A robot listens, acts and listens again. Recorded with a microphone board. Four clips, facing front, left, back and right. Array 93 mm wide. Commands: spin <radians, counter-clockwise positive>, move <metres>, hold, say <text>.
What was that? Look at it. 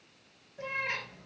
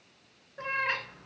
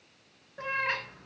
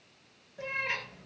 spin 2.27
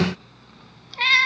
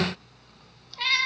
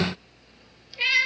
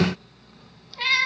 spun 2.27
say Found it: a cat meowing, straight ahead, 1 to 2 m away.